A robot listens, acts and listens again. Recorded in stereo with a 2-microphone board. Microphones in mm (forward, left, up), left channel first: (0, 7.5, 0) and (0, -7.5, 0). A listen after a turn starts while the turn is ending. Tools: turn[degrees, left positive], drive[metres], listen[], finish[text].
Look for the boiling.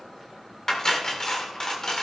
Action: listen[]
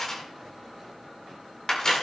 Action: listen[]
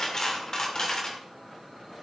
Action: finish[I can't make out boiling to turn to.]